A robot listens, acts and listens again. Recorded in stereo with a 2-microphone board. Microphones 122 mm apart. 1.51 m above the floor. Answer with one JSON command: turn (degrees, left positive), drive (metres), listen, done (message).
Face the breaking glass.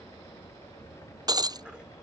{"turn": -35}
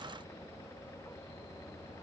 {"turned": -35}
{"listen": true}
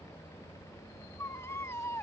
{"done": "I heard breaking glass, but can't make it out now. It was about straight ahead or 110° right."}